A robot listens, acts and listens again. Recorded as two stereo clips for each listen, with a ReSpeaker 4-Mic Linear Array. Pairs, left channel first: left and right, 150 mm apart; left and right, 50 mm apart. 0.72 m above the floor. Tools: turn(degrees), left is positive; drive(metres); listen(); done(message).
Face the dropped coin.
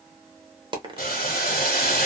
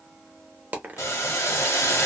turn(degrees=-35)
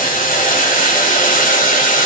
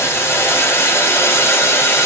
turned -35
listen()
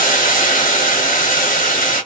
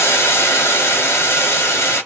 done("I heard a dropped coin, but can't make it out now. It was about straight ahead or 110° right.")